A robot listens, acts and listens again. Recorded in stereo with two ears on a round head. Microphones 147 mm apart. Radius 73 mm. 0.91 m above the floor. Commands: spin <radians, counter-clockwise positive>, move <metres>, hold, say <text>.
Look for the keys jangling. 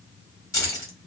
spin 0.35
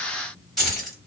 say Facing the keys jangling, 1 to 2 m away.